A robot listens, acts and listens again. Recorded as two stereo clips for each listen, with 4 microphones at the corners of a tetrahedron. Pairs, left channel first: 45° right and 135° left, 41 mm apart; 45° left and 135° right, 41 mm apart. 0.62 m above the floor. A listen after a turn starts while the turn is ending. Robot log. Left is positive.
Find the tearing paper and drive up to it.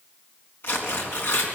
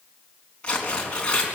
note: The tearing paper: 25° right.
cmd yaw -25
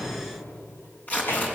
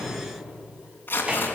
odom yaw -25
cmd fwd 1.0
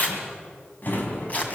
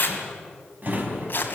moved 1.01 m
cmd fwd 1.0
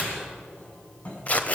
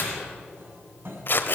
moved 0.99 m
note: The tearing paper is now 10° left.
cmd yaw +10
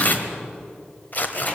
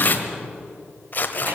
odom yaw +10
cmd fwd 1.0
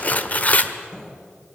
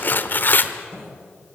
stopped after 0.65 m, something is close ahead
end: I am next to the tearing paper.